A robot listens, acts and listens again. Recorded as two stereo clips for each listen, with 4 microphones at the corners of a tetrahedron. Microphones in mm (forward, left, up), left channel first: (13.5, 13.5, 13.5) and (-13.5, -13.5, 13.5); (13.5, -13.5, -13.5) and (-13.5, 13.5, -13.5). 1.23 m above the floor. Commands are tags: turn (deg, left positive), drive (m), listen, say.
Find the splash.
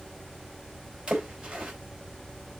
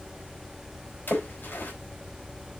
<turn deg="-75"/>
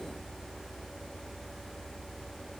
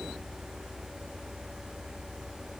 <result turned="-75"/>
<say>I heard a splash from this way, but can't make it out now.</say>